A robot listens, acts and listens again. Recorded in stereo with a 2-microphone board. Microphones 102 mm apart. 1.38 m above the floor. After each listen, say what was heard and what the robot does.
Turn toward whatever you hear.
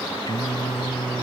The singing: about 40° left or 140° left. Turn 40° left.
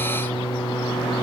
So it is at 115° left. Turn 115° left.
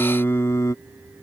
The singing is now 35° left. Turn 35° left.
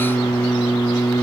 The singing is now 30° left. Turn 30° left.
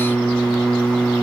Found it: singing, straight ahead.